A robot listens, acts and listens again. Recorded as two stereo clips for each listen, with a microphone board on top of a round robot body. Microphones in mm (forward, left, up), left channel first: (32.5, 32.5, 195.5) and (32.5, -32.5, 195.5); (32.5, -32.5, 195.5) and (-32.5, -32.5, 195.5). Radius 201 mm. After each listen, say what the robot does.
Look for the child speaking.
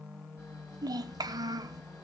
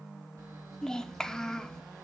Turn 80° right.
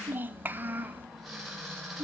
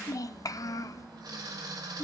Turn 30° right.
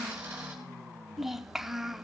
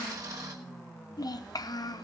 Facing the child speaking.